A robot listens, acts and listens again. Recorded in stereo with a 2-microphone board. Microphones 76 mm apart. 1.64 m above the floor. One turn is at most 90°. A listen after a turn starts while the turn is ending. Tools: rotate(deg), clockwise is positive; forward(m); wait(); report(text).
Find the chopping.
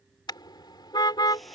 wait()
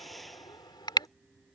wait()
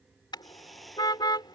report("I can't make out chopping to turn to.")